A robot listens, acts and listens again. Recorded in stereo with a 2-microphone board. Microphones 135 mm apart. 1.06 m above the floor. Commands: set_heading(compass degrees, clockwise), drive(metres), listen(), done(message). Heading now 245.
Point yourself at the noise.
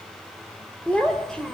set_heading(215)
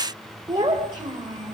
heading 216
set_heading(256)
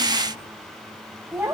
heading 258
set_heading(268)
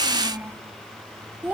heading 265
done("Found it: a child speaking, straight ahead, 2 to 4 m away.")